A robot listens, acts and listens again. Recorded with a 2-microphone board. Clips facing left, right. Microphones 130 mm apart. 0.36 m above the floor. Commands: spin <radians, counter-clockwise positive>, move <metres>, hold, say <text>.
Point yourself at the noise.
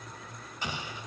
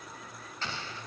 spin 0.52
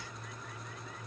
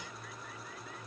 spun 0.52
hold
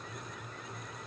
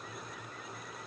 say I heard an explosion, but can't make it out now. It was about 15° right or 135° left.